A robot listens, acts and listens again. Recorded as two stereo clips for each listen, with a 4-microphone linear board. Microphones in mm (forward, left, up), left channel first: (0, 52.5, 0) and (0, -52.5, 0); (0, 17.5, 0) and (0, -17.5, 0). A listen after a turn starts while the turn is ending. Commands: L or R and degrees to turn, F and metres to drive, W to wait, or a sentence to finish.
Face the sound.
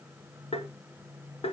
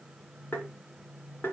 L70
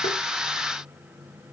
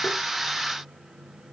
W
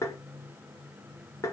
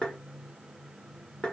L30
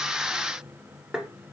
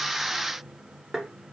Found it: tapping, straight ahead, 1 to 2 m away.